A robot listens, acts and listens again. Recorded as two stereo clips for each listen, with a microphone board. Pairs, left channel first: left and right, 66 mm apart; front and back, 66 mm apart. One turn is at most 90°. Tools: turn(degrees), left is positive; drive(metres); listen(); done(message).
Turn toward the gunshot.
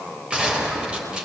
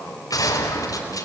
turn(degrees=-15)
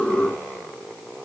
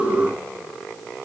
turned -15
done("Facing where the gunshot came from. I can't hear it now.")